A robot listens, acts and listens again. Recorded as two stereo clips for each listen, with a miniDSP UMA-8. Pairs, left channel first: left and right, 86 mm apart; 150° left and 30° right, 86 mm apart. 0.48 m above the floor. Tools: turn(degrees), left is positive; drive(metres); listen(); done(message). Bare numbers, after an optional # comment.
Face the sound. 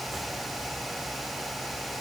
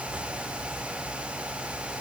listen()
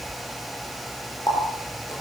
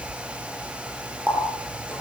# The running tap: 45° left.
turn(45)
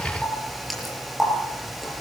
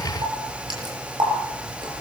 done("Facing the running tap, over 4 m away.")